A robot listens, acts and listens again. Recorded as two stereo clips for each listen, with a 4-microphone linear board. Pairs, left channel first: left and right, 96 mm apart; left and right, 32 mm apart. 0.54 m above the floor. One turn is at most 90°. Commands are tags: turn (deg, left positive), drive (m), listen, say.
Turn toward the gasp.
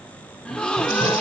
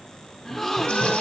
<turn deg="30"/>
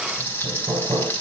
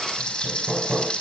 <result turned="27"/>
<listen/>
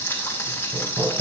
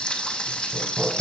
<say>I heard a gasp, but can't make it out now. It was about 15° right or 140° left.</say>